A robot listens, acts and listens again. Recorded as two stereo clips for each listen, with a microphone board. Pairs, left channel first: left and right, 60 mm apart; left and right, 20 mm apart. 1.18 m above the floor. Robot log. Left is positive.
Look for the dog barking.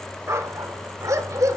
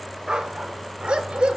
note: The dog barking: about 70° right or 110° right.
cmd yaw -70
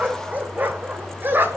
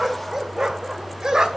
note: So it is at 35° right.
cmd yaw -35
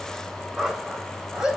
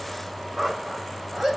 note: The dog barking is now 10° right.
cmd yaw -10
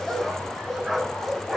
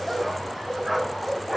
end: Facing the dog barking, 2 to 4 m away.